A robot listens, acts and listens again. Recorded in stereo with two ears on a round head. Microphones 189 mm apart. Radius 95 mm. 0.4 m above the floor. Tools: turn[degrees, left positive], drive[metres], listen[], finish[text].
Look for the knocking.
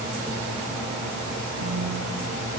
Action: listen[]
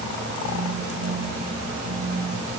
Action: listen[]
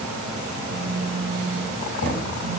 Thought: The knocking: about 75° left or 105° left.
Action: turn[75]
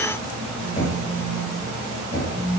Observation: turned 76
Thought: So it is at 30° left.
Action: turn[30]
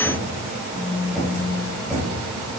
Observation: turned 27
Action: finish[Facing the knocking.]